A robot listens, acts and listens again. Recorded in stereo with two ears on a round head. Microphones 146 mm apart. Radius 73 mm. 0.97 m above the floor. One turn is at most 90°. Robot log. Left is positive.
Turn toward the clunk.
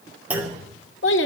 cmd yaw -30
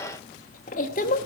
cmd idle
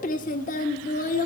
end: I heard a clunk, but can't make it out now. It was about 20° left or 140° right.